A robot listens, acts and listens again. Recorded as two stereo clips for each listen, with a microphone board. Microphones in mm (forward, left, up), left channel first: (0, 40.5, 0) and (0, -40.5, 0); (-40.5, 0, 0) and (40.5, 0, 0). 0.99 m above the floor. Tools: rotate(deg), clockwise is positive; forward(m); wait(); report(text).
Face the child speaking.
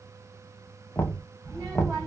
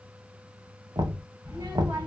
rotate(45)
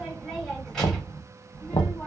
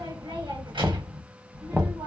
rotate(-10)
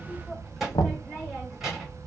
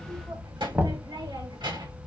report("Facing the child speaking.")